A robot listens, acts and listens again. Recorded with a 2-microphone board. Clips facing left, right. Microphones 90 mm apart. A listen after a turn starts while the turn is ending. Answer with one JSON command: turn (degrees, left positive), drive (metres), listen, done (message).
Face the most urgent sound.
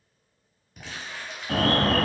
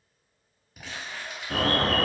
{"turn": 60}
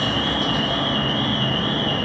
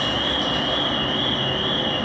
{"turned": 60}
{"turn": 15}
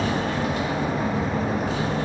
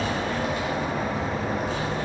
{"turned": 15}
{"done": "Found it: an alarm, straight ahead."}